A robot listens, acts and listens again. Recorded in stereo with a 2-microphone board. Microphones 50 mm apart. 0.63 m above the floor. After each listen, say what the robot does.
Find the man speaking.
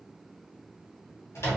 Keep listening.
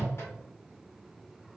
Keep listening.
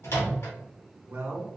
Turn 40° right.
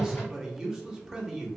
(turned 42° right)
Turn 10° right.
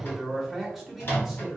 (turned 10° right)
Facing the man speaking, 1 to 2 m away.